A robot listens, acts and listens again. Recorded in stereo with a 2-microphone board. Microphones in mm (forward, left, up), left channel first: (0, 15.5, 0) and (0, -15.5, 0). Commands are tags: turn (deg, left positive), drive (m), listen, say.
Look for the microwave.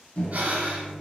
<turn deg="45"/>
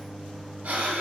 <say>Found it: a microwave, straight ahead, under 1 m away.</say>